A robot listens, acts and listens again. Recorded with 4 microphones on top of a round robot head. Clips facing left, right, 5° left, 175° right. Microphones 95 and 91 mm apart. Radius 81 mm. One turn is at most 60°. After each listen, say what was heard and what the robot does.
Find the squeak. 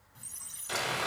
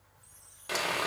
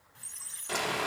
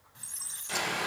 The squeak: 115° left. Turn 60° left.
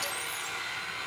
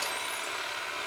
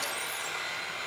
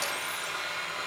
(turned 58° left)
Nothing new. It was at 60° left. Turn 60° left.
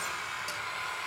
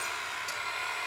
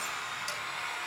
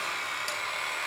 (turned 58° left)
Keep listening.
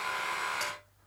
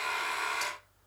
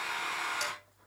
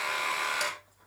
I heard a squeak from this way, but can't make it out now.